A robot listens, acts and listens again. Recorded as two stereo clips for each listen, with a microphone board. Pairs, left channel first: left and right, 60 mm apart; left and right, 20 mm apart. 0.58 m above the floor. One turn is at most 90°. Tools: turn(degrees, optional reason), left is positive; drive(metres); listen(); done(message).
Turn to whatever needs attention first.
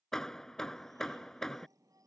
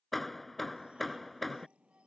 turn(degrees=-75, reason="The shout: about 75° right or 105° right.")
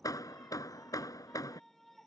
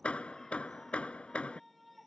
done("Found it: a shout, straight ahead.")